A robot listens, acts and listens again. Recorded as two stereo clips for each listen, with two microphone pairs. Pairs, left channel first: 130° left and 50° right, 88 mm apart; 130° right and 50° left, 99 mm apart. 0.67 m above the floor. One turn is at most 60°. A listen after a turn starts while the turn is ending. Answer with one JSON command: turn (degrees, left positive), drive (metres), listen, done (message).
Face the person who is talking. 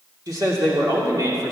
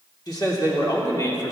{"turn": -60}
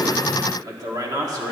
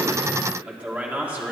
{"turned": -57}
{"turn": -15}
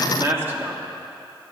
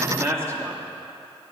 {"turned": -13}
{"done": "Found it: a man speaking, straight ahead, 1 to 2 m away."}